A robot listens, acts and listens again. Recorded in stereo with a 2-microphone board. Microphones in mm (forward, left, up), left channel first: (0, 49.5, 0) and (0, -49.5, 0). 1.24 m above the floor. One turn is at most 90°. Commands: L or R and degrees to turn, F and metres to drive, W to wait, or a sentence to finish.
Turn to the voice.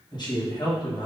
L45
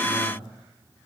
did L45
L90
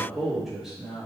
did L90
Found it: a man speaking, straight ahead, 1 to 2 m away.